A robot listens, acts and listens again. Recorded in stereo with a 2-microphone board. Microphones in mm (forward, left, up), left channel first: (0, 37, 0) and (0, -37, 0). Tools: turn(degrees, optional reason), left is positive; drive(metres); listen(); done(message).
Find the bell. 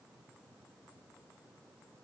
listen()
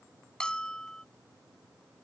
turn(degrees=30)
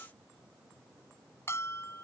turn(degrees=140, reason="So it is at 140° left.")
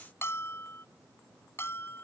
turn(degrees=40, reason="The bell is now 40° left.")
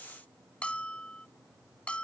turn(degrees=20, reason="The bell is now 20° left.")
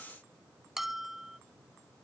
done("Facing the bell.")